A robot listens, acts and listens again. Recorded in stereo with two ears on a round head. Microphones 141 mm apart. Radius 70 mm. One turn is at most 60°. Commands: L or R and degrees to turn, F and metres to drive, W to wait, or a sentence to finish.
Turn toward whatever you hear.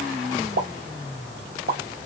R60
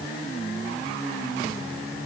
W
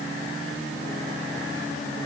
I heard a pop, but can't make it out now. It was about 15° right or 45° right.